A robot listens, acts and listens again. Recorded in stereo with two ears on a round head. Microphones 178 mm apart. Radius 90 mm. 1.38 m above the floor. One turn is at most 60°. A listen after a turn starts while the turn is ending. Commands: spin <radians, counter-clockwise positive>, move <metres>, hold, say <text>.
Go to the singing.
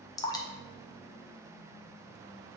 hold
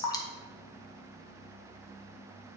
hold
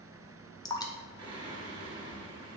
spin -0.44
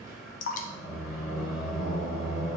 move 1.0
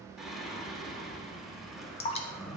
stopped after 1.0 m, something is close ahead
say I am next to the singing.